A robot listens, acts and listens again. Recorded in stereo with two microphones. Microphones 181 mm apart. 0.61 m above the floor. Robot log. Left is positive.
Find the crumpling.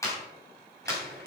cmd yaw -90
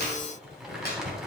end: Found it: crumpling, straight ahead, 2 to 4 m away.